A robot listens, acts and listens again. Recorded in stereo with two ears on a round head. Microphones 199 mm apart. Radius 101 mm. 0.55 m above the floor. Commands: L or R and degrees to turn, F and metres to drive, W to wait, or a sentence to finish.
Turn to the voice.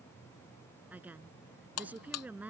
R30
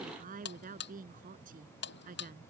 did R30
R140
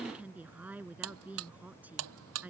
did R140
Facing the woman speaking.